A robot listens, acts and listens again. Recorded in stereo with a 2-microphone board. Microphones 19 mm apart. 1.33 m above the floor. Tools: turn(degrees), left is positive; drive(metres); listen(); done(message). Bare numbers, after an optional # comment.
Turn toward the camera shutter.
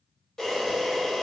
# The camera shutter: about 25° left or 155° left.
turn(25)
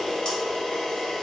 # So it is at 125° left.
turn(125)
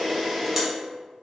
done("Found it: a camera shutter, straight ahead, 1 to 2 m away.")